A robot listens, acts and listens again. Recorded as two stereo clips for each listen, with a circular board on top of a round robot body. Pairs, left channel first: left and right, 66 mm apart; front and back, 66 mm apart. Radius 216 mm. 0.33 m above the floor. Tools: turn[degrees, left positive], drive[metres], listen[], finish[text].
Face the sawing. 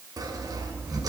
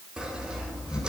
Thought: The sawing: 105° right.
Action: turn[-105]
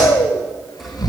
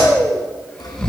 Action: finish[Facing the sawing, 2 to 4 m away.]